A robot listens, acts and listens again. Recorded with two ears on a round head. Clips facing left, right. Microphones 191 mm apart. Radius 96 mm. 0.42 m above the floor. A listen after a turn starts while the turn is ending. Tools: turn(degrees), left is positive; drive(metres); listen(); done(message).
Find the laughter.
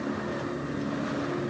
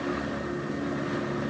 listen()
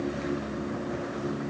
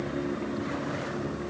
listen()
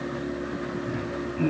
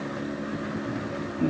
turn(degrees=45)
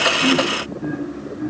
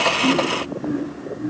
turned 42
turn(degrees=110)
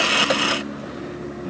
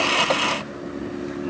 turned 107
done("Facing the laughter, 2 to 4 m away.")